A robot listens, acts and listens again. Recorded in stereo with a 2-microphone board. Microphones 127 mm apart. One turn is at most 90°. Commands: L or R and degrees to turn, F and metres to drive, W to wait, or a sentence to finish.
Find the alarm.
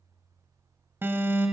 R20
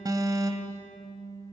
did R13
R90
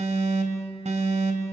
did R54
R90
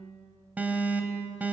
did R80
R15
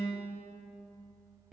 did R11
Found it: an alarm, straight ahead, 2 to 4 m away.